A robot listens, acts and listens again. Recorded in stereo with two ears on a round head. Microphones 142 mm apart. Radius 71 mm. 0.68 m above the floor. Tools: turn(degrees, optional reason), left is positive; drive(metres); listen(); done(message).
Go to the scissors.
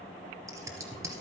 turn(degrees=-20, reason="The scissors: about 20° right or 160° right.")
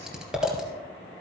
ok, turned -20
drive(metres=1.0)
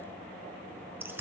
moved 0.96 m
turn(degrees=-15, reason="The scissors is now 15° right.")
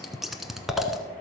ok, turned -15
drive(metres=1.0)
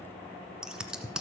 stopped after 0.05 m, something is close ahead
done("I am next to the scissors.")